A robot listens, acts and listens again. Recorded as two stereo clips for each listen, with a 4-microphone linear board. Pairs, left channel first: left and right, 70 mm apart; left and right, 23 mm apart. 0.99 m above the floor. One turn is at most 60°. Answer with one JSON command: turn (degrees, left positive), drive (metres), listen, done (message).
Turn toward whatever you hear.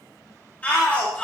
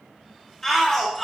{"turn": 20}
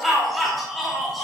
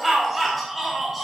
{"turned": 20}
{"done": "Found it: a shout, straight ahead."}